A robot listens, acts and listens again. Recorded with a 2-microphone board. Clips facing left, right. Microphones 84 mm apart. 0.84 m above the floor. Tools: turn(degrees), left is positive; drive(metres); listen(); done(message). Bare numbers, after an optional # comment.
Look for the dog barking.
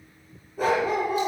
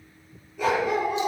# The dog barking: about 40° left or 140° left.
turn(40)
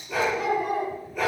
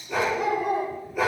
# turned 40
done("Found it: a dog barking, straight ahead.")